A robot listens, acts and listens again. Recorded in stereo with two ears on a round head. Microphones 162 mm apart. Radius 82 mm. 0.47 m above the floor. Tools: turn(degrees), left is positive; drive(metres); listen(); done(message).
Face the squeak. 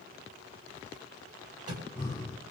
listen()
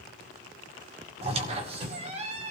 turn(degrees=-35)
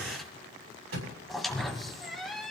done("Facing the squeak.")